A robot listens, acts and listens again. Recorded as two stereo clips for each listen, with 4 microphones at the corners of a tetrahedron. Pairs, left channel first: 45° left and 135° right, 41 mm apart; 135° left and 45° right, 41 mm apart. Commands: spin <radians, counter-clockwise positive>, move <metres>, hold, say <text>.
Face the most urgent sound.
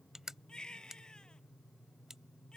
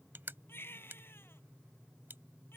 spin 2.01
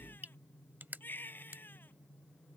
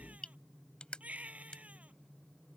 spin 0.17
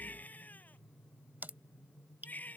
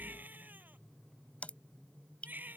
say Found it: a baby crying, straight ahead.